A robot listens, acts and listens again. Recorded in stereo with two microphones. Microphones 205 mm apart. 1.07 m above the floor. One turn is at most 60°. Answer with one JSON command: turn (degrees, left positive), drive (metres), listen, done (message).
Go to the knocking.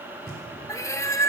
{"turn": -50}
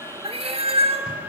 {"listen": true}
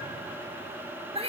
{"listen": true}
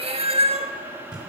{"drive": 1.0}
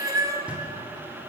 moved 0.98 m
{"drive": 1.0}
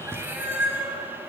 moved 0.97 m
{"turn": -10}
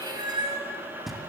{"drive": 1.0}
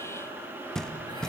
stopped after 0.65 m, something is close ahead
{"done": "Arrived at the knocking, straight ahead."}